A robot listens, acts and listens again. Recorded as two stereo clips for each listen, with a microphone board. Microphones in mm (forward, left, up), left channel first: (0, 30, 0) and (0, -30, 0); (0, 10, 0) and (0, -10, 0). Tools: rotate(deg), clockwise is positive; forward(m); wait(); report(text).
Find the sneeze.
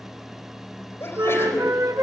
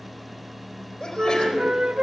rotate(-40)
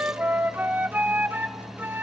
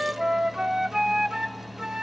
wait()
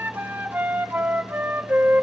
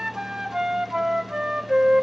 report("I heard a sneeze, but can't make it out now. It was about straight ahead or 100° left.")